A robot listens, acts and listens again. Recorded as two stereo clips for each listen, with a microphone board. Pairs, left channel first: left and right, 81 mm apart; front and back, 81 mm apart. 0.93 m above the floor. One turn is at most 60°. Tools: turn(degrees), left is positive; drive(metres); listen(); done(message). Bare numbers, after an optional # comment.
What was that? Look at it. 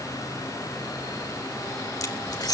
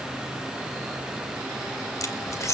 # The keys jangling: 50° left.
turn(50)
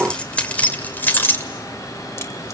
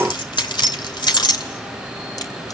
# The keys jangling is now 35° left.
turn(35)
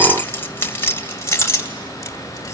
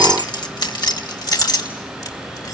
# The keys jangling is now 35° left.
turn(35)
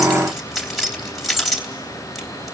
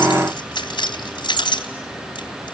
done("Facing the keys jangling, 2 to 4 m away.")